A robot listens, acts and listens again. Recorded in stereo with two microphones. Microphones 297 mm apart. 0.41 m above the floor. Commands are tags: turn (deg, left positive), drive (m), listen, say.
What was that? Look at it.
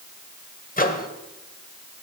<turn deg="30"/>
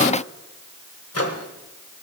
<turn deg="115"/>
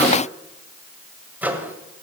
<say>Facing the microwave, 1 to 2 m away.</say>